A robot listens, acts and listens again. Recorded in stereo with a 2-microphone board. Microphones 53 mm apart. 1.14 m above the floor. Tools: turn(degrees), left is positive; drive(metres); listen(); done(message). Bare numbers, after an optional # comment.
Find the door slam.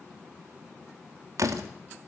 turn(-90)
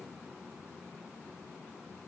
done("Facing where the door slam came from. I can't hear it now.")